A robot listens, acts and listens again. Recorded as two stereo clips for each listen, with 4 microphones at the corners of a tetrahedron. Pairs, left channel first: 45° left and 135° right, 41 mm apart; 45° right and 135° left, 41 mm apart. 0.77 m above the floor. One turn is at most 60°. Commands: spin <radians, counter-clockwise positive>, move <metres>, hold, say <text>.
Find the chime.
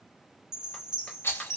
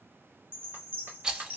spin 1.05
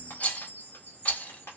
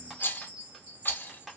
spin 1.05
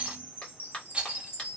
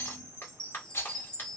spin 0.35
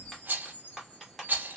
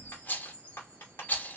say Facing the chime.